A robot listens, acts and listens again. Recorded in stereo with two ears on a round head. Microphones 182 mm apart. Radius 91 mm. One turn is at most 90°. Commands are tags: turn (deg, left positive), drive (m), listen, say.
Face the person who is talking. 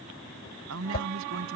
<turn deg="-70"/>
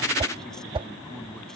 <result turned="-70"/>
<listen/>
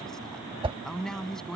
<say>Found it: a man speaking, straight ahead.</say>